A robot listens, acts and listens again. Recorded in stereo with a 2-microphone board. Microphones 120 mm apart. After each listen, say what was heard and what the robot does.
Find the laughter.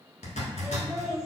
Turn 30° left.
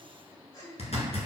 So it is at 150° left. Turn 150° left.
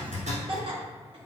The laughter is now 45° right. Turn 45° right.
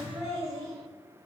The laughter is now 30° right. Turn 30° right.
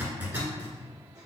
Keep listening.
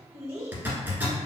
The laughter is now 25° right. Turn 25° right.
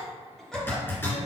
Keep listening.
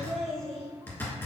Found it: laughter, straight ahead, 1 to 2 m away.